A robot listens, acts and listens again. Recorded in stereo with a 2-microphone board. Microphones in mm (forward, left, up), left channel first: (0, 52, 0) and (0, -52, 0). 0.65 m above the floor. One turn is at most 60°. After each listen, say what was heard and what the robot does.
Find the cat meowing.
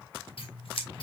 Keep listening.
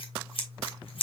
Keep listening.
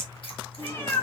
The cat meowing: about 25° left or 155° left. Turn 25° left.
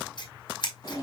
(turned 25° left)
The cat meowing: about 40° left or 140° left. Turn 40° left.
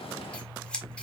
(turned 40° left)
Keep listening.
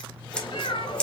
So it is at 125° left. Turn 60° left.
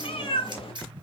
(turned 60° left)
The cat meowing is now 65° left. Turn 60° left.
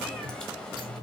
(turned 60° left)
The cat meowing is now 10° left. Turn 10° left.
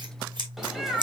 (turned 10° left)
Found it: a cat meowing, straight ahead, 1 to 2 m away.